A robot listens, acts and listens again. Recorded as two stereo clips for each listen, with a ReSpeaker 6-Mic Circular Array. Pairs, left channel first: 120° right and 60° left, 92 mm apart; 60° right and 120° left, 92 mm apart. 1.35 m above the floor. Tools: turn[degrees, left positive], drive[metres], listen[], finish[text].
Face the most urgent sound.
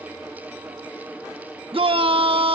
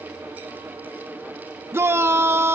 Thought: The shout: 55° left.
Action: turn[55]
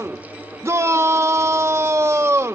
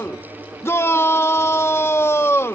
Action: finish[Found it: a shout, straight ahead.]